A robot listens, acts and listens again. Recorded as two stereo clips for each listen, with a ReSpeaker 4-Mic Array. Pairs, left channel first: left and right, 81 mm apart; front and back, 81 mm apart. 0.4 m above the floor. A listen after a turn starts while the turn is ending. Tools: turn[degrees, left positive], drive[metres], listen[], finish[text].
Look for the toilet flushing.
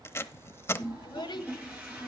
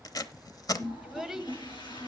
Thought: The toilet flushing: 20° right.
Action: turn[-20]
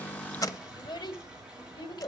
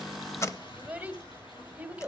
Action: listen[]
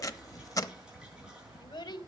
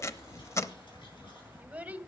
Action: listen[]
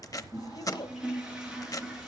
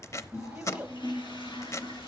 Thought: The toilet flushing is now 10° right.
Action: turn[-10]
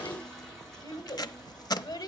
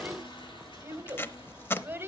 Action: listen[]
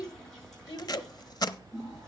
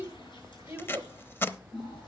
Action: finish[Facing the toilet flushing.]